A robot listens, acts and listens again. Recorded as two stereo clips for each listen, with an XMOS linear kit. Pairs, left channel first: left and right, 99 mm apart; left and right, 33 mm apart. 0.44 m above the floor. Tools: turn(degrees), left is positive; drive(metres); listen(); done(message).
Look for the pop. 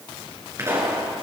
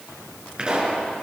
turn(degrees=-30)
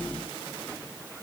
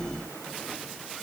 listen()
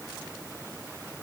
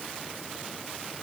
done("I heard a pop, but can't make it out now. It was about straight ahead or 120° right.")